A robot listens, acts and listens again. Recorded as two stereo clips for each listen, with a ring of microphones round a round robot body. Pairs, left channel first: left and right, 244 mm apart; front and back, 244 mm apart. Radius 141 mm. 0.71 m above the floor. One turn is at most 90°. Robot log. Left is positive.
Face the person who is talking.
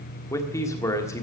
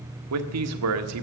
note: The man speaking: 170° left.
cmd yaw +90
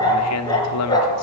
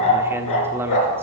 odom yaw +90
note: The man speaking is now 100° left.
cmd yaw +90
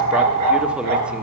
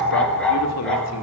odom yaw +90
note: Nothing new. It was at 10° left.
cmd yaw +10
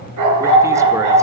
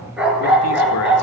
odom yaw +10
cmd idle
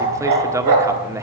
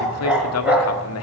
note: The man speaking is now 10° right.
cmd yaw -10
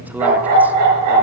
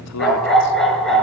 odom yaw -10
cmd idle
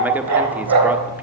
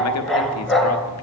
cmd idle
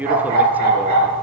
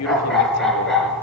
end: Facing the man speaking, 1 to 2 m away.